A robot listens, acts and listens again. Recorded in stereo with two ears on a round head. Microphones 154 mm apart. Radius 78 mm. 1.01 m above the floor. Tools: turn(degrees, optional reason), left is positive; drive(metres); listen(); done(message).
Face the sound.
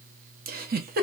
turn(degrees=-55, reason="The giggle: about 55° right or 125° right.")
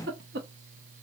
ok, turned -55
turn(degrees=-65, reason="So it is at 65° right.")
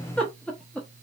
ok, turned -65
done("Found it: a giggle, straight ahead, under 1 m away.")